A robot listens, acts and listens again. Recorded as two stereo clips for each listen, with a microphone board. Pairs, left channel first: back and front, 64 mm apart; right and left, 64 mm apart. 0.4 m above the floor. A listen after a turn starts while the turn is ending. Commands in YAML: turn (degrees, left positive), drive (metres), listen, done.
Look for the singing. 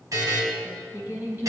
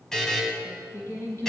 turn: -55
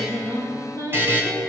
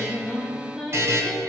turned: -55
turn: 10
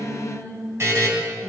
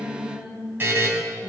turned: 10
turn: 25
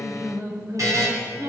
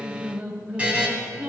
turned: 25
turn: 25
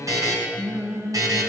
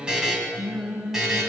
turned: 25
turn: 20
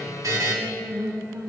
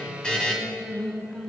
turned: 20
done: "Found it: singing, straight ahead."